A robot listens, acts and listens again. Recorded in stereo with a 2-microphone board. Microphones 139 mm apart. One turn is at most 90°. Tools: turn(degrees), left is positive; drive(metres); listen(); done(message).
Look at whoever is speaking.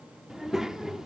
turn(degrees=-30)
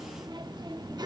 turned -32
turn(degrees=-90)
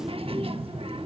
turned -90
turn(degrees=-55)
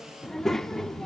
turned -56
done("Facing the child speaking, under 1 m away.")